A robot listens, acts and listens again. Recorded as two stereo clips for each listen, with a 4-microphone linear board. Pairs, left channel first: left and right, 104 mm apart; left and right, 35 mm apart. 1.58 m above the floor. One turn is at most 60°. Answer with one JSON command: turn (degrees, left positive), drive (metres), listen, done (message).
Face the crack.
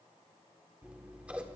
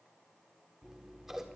{"listen": true}
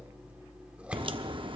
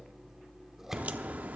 {"turn": -50}
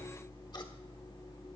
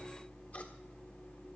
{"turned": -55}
{"listen": true}
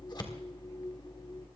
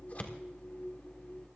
{"done": "I heard a crack, but can't make it out now. It was about 5° left or 75° right."}